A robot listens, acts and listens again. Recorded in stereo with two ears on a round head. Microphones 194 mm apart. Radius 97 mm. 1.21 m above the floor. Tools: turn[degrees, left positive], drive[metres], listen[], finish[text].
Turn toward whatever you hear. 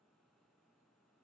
Action: listen[]
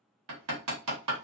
Action: turn[-90]
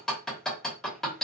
Action: finish[Facing the hammering.]